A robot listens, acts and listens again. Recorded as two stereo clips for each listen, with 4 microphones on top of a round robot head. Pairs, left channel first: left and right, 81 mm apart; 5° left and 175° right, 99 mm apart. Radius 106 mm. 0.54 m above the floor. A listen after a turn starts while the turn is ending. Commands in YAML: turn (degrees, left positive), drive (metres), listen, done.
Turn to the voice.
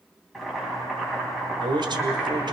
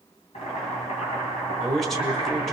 turn: -85
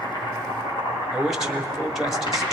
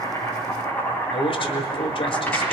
done: "Found it: a man speaking, straight ahead."